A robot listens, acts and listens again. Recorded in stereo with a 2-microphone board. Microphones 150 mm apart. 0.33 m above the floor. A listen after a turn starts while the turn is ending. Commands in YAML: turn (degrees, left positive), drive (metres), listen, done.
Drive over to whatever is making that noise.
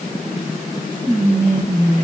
turn: -55
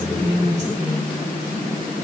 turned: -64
turn: -50
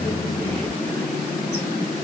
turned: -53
listen: true
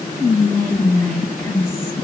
drive: 1.0
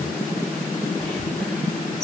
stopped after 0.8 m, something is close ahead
done: "I am next to the whispering."